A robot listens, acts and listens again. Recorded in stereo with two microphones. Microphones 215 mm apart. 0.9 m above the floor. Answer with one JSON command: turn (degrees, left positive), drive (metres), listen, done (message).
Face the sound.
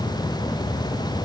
{"listen": true}
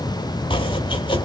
{"turn": 25}
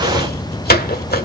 {"turn": 135}
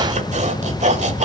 {"turn": -35}
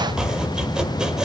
{"done": "Facing the chopping."}